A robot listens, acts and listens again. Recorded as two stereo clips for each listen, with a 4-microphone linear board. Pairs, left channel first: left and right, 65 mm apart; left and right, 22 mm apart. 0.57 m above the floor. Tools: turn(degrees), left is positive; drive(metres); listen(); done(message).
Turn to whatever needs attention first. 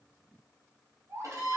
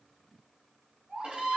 turn(degrees=-45)
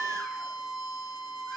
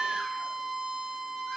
listen()
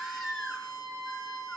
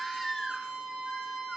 done("Facing the baby crying, 2 to 4 m away.")